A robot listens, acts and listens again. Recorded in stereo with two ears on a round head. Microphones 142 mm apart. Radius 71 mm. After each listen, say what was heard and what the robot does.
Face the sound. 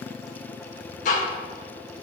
The ticking: about 50° left or 130° left. Turn 50° left.
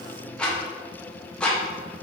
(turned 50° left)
So it is at 10° left. Turn 10° left.
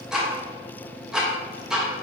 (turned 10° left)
Facing the ticking, 1 to 2 m away.